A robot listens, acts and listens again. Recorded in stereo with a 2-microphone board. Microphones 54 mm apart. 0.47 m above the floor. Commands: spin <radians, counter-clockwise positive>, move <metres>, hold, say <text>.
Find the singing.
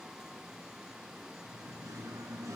spin -1.57
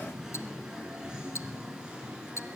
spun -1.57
spin -0.35
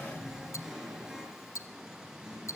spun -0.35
spin -0.17
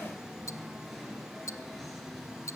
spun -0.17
say Found it: singing, straight ahead.